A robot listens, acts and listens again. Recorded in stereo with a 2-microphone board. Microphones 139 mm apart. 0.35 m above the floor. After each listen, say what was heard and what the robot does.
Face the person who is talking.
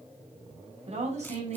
The woman speaking: about 55° right or 125° right. Turn 55° right.
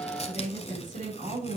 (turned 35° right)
So it is at 85° right. Turn 85° right.
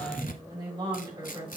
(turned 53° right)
The woman speaking is now 35° right. Turn 35° right.
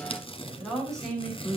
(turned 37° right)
Found it: a woman speaking, straight ahead.